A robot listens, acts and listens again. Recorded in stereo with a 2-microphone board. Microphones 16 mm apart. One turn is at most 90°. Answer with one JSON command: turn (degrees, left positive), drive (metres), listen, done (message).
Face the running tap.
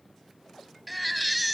{"listen": true}
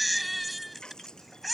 {"turn": 50}
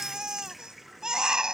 {"done": "Facing the running tap."}